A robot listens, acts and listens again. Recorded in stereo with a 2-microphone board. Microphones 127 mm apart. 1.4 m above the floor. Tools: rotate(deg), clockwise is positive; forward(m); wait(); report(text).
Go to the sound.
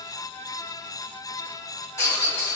rotate(-25)
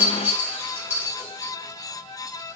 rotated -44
rotate(15)
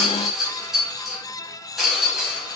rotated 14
forward(1.0)
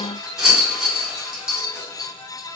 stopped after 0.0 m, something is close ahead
report("Blocked. The rattle is further on, straight ahead.")